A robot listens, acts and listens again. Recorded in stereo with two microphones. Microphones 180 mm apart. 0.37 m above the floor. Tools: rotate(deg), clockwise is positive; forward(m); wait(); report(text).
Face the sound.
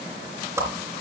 rotate(30)
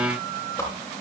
rotate(-15)
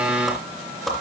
report("Facing the whoosh.")